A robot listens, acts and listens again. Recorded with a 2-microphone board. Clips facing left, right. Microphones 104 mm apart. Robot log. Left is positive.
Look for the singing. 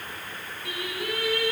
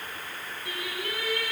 note: The singing: about 70° left or 110° left.
cmd yaw +70
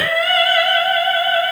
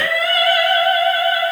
note: So it is at 50° left.
cmd yaw +50
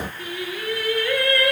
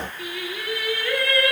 end: Facing the singing, over 4 m away.